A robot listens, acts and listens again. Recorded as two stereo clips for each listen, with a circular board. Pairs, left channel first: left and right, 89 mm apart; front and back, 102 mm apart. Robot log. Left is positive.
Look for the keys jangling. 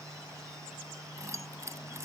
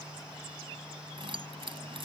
note: The keys jangling: 145° right.
cmd yaw -145
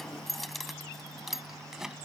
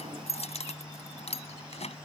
end: Facing the keys jangling.